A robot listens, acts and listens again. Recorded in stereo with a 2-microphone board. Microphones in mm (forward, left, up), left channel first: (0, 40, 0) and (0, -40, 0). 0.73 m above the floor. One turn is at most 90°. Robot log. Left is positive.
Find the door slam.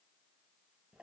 cmd idle
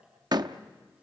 note: The door slam: about 60° right or 120° right.
cmd yaw -60
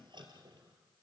cmd idle
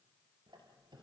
end: I heard a door slam, but can't make it out now. It was about straight ahead or 60° right.